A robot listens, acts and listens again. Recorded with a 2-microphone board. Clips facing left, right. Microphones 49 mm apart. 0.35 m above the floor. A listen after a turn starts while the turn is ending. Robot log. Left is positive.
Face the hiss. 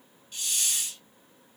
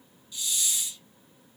note: The hiss: about 45° left or 135° left.
cmd yaw +45
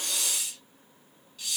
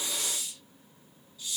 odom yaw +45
note: So it is at 90° left.
cmd yaw +90
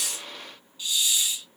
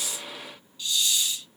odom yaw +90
note: The hiss is now 15° left.
cmd yaw +15
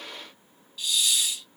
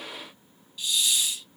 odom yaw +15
end: Facing the hiss, 2 to 4 m away.